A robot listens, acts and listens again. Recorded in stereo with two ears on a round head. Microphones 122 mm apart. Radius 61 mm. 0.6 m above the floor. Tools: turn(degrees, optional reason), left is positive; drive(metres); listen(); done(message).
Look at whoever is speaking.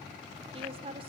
turn(degrees=-45, reason="The woman speaking: about 45° right or 135° right.")
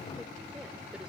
listen()
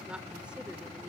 turn(degrees=-10, reason="So it is at 10° right.")
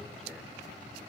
listen()
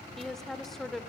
done("Found it: a woman speaking, straight ahead.")